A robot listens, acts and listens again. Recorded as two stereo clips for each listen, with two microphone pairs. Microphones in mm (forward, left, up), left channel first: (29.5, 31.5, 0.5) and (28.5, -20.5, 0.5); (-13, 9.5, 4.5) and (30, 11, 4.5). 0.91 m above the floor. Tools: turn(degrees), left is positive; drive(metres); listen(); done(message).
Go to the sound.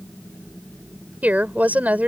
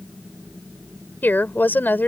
turn(degrees=-145)
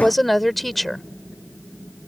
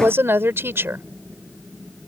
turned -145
drive(metres=1.0)
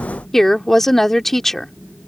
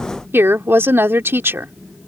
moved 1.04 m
drive(metres=1.0)
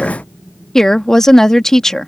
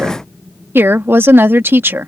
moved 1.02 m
turn(degrees=10)
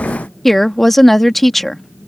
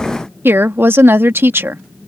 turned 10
drive(metres=1.0)
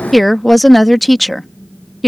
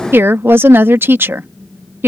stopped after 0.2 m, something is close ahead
done("Arrived at the woman speaking, straight ahead.")